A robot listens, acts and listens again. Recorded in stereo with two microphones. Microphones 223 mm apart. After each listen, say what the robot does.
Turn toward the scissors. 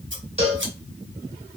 Turn 55° right.
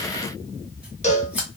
Facing the scissors, 1 to 2 m away.